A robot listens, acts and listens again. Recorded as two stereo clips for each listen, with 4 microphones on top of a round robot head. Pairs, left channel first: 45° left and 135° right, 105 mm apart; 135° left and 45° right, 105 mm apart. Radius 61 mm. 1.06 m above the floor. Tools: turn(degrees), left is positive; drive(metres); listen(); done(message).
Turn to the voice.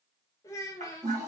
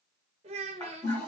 turn(degrees=-20)
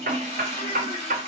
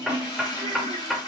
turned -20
listen()
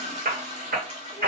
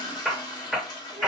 listen()
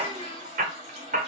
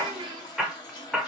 done("Facing where the child speaking came from. I can't hear it now.")